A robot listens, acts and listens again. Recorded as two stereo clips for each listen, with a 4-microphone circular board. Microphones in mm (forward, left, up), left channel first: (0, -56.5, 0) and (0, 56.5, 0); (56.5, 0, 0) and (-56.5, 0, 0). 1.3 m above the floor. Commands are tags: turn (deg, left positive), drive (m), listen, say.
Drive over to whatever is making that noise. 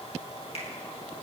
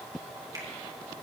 <turn deg="-120"/>
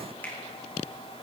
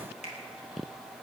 <turn deg="-15"/>
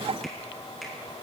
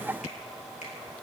<listen/>
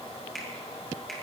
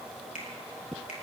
<drive m="1.0"/>
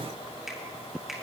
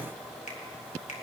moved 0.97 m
<drive m="1.0"/>
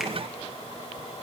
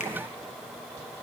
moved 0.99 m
<listen/>
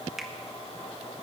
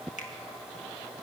<listen/>
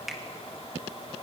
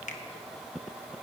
<drive m="1.0"/>
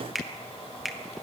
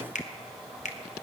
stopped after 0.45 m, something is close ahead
<say>I am next to the finger snap.</say>